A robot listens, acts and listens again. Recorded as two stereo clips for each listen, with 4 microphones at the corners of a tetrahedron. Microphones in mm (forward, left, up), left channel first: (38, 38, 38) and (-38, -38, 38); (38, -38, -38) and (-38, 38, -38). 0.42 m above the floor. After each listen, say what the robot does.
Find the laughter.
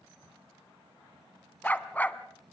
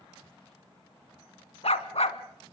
Keep listening.
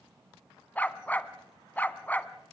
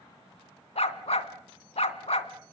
Keep listening.
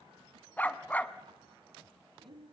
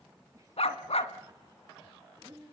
Turn 170° right.
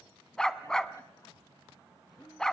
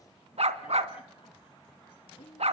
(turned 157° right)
Turn 10° right.
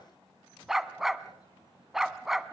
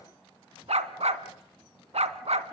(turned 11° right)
Keep listening.
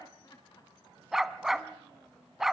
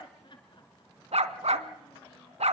Found it: laughter, straight ahead.